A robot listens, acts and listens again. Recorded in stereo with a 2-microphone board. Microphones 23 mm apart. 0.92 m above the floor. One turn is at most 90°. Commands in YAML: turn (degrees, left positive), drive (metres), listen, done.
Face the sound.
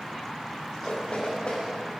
turn: 55
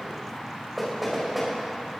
done: "Facing the knocking, over 4 m away."